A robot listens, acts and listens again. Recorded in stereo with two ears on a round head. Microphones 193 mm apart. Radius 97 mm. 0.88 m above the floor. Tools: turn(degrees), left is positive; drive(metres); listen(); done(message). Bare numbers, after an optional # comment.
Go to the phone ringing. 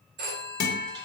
# The phone ringing: about 50° right or 130° right.
turn(-50)
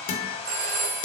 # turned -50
# So it is at 80° right.
turn(-80)
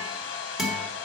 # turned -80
listen()
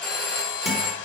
drive(1.0)
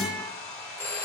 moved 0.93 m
# The phone ringing is now 10° left.
turn(10)
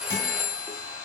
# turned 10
drive(1.0)
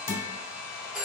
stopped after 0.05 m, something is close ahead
done("Arrived at the phone ringing, straight ahead.")